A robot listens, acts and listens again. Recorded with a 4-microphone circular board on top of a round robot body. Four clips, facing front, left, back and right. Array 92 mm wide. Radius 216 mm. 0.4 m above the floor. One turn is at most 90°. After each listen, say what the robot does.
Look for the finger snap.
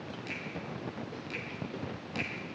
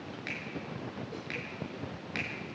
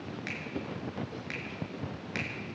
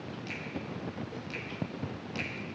Turn 90° left.
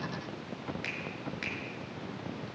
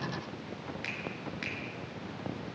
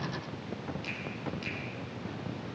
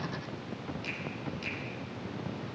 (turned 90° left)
Turn 40° left.
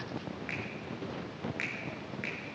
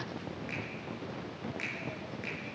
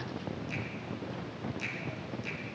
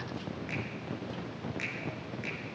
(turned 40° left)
Found it: a finger snap, straight ahead, over 4 m away.